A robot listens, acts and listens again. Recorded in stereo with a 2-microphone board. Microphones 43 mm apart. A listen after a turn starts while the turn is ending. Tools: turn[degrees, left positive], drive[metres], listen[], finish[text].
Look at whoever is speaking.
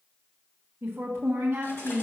Thought: The woman speaking: about 65° right or 115° right.
Action: turn[-65]
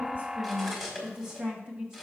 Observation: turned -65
Thought: So it is at 30° right.
Action: turn[-30]
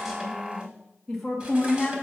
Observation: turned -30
Action: finish[Facing the woman speaking, 1 to 2 m away.]